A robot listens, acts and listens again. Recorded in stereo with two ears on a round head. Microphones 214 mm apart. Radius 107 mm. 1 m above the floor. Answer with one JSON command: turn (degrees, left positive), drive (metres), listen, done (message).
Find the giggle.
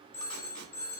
{"listen": true}
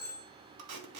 {"listen": true}
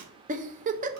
{"turn": -35}
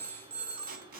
{"listen": true}
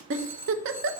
{"turn": -105}
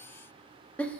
{"done": "Facing the giggle, under 1 m away."}